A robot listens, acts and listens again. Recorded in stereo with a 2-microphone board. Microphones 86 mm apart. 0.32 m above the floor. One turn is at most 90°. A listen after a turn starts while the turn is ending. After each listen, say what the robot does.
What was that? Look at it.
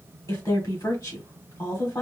Turn 40° left.
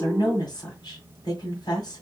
Turn 90° left.
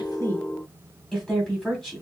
Turn 10° left.
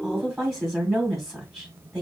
Facing the woman speaking.